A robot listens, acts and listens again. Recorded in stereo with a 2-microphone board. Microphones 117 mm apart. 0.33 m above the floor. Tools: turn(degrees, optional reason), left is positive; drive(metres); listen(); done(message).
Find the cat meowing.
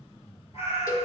turn(degrees=60, reason="The cat meowing: about 60° left or 120° left.")
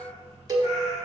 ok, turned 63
turn(degrees=65, reason="So it is at 65° left.")
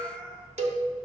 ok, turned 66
done("Found it: a cat meowing, straight ahead.")